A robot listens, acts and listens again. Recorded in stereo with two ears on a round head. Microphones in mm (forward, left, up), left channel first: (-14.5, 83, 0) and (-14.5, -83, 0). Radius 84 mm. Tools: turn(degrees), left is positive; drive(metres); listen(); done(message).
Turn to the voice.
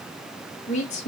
turn(degrees=35)
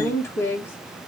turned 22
turn(degrees=15)
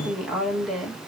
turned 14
done("Facing the woman speaking, 2 to 4 m away.")